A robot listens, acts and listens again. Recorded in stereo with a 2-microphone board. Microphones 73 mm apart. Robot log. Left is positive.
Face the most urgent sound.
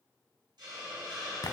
cmd idle
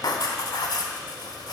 cmd idle
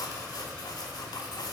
end: I can't make out anything urgent, only writing and a hiss.